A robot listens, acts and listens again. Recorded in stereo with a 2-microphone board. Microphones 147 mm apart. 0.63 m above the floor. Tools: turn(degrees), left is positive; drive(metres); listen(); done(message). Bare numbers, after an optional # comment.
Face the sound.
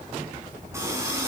# The running tap: about 20° right or 160° right.
turn(-20)
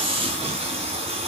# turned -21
# So it is at 140° right.
turn(-140)
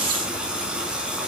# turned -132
done("Facing the running tap.")